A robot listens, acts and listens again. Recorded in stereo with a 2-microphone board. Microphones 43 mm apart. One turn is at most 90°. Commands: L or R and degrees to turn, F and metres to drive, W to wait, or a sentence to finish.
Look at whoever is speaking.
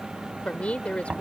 L30
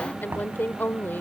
L90
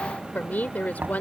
L50
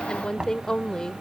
L20
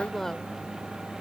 L10
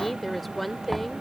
Found it: a woman speaking, straight ahead.